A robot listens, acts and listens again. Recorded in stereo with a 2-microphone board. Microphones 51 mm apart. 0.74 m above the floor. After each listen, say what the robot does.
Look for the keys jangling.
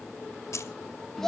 Turn 70° left.
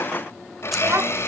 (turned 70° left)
Keep listening.
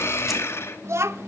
Keep listening.
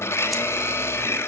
I heard keys jangling, but can't make it out now. It was about straight ahead or 40° left.